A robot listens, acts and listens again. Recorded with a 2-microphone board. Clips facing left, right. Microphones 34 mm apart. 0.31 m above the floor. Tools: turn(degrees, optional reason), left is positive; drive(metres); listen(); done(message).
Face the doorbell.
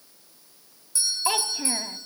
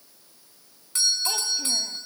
turn(degrees=-65, reason="The doorbell: about 65° right or 115° right.")
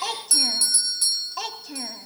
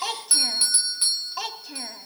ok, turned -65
turn(degrees=-35, reason="So it is at 35° right.")
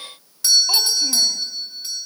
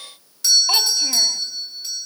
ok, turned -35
done("Found it: a doorbell, straight ahead, 2 to 4 m away.")